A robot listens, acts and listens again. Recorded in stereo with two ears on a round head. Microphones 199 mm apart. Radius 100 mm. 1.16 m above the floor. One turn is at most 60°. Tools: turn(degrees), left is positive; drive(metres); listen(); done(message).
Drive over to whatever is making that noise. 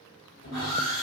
turn(degrees=60)
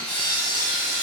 turn(degrees=40)
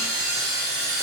turn(degrees=-15)
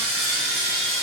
drive(metres=1.0)
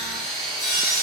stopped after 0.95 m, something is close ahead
done("Arrived at the sawing, straight ahead.")